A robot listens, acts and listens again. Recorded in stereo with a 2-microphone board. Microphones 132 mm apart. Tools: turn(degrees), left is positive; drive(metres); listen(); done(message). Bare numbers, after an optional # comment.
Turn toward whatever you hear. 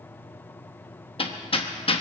# The hammering: about 45° left or 135° left.
turn(45)
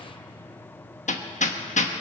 # So it is at 90° left.
turn(90)
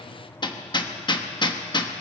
# The hammering is now 40° left.
turn(40)
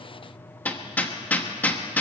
# The hammering is now 15° left.
turn(15)
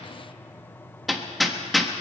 done("Facing the hammering.")